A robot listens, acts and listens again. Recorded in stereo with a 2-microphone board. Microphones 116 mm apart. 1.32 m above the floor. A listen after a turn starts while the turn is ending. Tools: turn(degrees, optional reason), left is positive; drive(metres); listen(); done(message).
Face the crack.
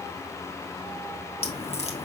turn(degrees=65, reason="The crack: about 65° left or 115° left.")
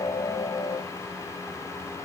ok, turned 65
listen()
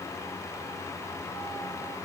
done("I heard a crack, but can't make it out now. It was about straight ahead or 50° left.")